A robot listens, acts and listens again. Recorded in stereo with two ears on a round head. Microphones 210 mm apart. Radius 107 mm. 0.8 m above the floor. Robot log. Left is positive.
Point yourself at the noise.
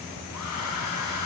cmd yaw +90
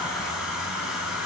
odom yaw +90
end: Found it: a hair dryer, straight ahead.